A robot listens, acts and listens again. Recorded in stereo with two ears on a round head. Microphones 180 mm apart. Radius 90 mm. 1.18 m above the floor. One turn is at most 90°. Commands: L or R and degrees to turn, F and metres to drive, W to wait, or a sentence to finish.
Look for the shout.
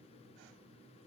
W
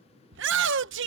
R65
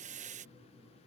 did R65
R40
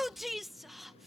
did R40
Found it: a shout, straight ahead.